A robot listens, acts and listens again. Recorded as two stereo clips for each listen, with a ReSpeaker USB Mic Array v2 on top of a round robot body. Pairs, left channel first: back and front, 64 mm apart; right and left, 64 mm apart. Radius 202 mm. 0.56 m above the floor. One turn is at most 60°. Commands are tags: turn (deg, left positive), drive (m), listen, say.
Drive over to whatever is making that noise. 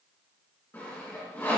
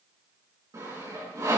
<turn deg="60"/>
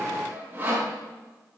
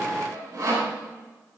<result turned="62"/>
<turn deg="60"/>
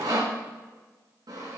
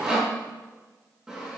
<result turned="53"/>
<turn deg="10"/>
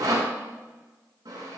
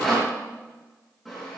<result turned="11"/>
<drive m="1.0"/>
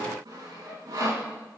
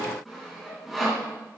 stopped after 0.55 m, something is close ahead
<say>Blocked. The sawing is further on, straight ahead.</say>